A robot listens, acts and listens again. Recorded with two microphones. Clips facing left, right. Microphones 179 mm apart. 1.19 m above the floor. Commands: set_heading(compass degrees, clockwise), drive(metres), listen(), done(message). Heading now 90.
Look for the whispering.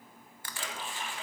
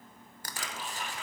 set_heading(55)
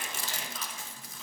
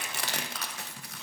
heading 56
listen()
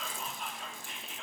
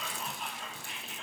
done("Facing the whispering, 2 to 4 m away.")